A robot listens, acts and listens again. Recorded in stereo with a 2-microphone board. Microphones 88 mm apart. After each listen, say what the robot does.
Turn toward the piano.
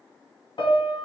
Turn 70° left.
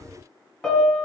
Found it: a piano, straight ahead, 2 to 4 m away.